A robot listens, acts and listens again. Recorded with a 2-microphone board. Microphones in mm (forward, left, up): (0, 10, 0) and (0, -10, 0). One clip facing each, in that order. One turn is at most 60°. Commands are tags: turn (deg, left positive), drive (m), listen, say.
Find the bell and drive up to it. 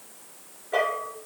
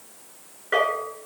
<turn deg="-60"/>
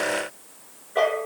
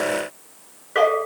<turn deg="-50"/>
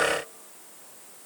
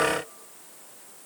<listen/>
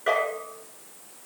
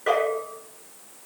<drive m="1.0"/>
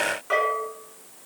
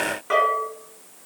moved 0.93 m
<drive m="1.0"/>
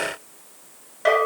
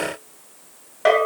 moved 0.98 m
<turn deg="-15"/>
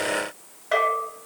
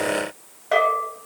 <drive m="1.0"/>
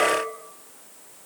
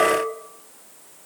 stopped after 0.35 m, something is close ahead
<say>I am next to the bell.</say>